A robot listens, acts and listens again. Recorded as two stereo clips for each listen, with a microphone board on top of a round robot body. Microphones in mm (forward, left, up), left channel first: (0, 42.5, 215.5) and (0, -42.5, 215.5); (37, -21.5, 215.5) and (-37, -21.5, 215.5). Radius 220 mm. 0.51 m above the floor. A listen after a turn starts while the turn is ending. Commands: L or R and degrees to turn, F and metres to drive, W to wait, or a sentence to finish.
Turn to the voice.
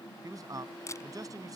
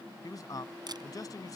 R40
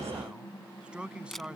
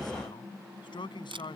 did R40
R10
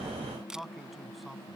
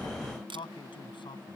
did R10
Found it: a man speaking, straight ahead.